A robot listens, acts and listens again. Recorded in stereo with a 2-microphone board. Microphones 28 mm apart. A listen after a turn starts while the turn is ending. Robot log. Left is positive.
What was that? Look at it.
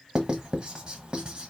note: The writing: about 40° right or 140° right.
cmd yaw -40
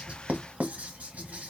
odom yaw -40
note: So it is at 100° right.
cmd yaw -100
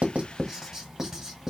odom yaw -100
note: The writing is now 15° right.
cmd yaw -15
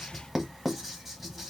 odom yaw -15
end: Facing the writing, 1 to 2 m away.